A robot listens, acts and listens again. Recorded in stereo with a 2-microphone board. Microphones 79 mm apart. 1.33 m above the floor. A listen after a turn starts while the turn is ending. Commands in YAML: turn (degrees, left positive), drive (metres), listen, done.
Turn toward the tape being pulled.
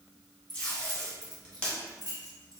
turn: 30
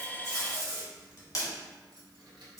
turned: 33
turn: 135
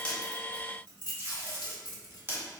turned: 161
turn: -30
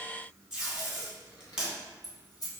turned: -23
done: "Found it: tape being pulled, straight ahead, 2 to 4 m away."